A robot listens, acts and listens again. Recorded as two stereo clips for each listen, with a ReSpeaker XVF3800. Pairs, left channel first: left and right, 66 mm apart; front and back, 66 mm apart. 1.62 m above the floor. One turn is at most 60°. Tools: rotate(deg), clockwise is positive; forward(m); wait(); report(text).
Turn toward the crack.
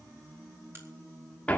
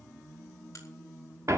rotate(40)
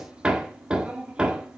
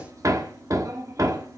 report("I heard a crack from this way, but can't make it out now.")